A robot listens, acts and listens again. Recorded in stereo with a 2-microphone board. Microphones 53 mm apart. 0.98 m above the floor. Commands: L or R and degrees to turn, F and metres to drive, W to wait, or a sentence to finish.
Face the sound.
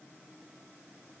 W
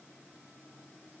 W
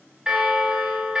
R30
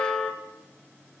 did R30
L20
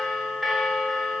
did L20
Found it: a bell, straight ahead, 1 to 2 m away.